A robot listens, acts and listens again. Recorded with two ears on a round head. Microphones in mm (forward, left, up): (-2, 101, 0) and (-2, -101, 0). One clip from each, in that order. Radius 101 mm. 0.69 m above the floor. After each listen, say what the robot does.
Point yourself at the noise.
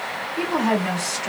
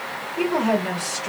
Turn 55° left.
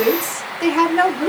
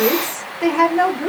Turn 40° left.
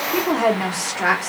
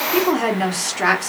Turn 15° right.
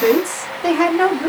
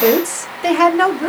Turn 20° right.
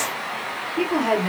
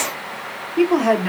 Turn 15° right.
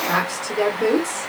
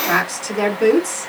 Turn 10° right.
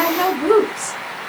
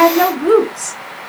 Found it: a woman speaking, straight ahead.